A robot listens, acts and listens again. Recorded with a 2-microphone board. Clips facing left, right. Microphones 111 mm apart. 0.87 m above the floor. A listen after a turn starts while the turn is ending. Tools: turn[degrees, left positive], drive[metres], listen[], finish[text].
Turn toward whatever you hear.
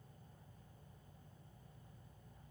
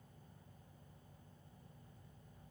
Action: listen[]
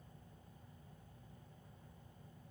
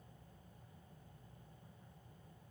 Action: listen[]
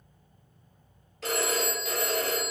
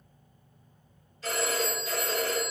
Action: turn[90]
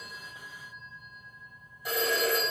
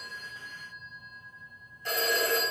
Thought: So it is at 10° left.
Action: turn[10]
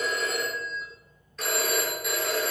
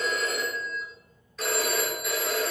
Action: finish[Facing the phone ringing, 2 to 4 m away.]